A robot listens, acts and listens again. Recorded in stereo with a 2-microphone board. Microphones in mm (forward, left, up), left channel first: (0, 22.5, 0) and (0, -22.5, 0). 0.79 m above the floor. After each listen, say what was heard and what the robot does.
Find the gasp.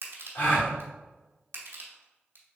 The gasp: about 60° left or 120° left. Turn 60° left.
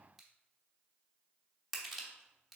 Keep listening.
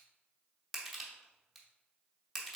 I heard a gasp, but can't make it out now. It was about straight ahead or 60° left.